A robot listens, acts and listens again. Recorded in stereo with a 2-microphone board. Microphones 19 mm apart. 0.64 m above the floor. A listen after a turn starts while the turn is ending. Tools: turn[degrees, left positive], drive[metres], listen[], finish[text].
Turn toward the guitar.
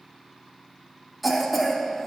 Action: listen[]
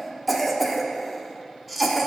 Action: listen[]
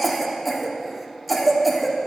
Action: finish[I can't make out a guitar to turn to.]